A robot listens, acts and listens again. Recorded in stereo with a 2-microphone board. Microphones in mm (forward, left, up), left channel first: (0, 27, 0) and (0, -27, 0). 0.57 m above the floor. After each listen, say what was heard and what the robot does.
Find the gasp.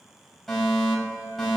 Keep listening.
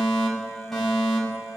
Keep listening.
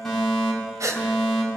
Turn 90° right.
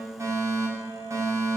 Facing where the gasp came from. I can't hear it now.